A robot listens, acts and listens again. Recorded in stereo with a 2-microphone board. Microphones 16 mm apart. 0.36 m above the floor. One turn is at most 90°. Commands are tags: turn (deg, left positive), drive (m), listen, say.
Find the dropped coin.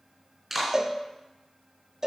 <listen/>
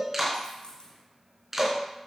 <turn deg="45"/>
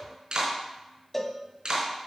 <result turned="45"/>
<listen/>
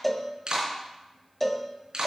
<say>I heard a dropped coin, but can't make it out now. It was about straight ahead or 90° left.</say>